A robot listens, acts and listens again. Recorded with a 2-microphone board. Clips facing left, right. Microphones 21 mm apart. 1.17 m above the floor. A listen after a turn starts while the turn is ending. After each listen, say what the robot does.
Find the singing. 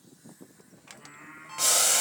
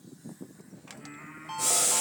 Turn 30° right.
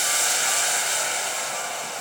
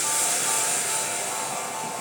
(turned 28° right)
Keep listening.
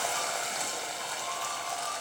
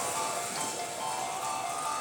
Keep listening.
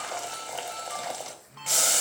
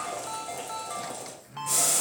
Turn 105° right.
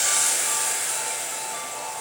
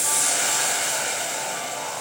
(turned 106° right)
Keep listening.
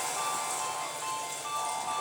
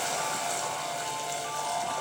Keep listening.
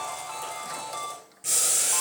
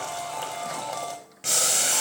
Facing where the singing came from. I can't hear it now.